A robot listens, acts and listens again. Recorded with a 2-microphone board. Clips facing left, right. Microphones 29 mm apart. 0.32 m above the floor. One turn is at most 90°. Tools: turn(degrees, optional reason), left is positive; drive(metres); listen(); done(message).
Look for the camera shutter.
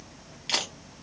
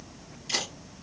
turn(degrees=60, reason="The camera shutter: about 60° left or 120° left.")
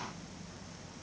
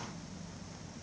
listen()
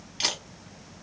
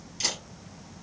turn(degrees=50, reason="So it is at 50° left.")
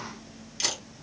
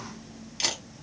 turn(degrees=-15, reason="The camera shutter is now 15° right.")
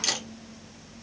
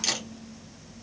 done("Found it: a camera shutter, straight ahead.")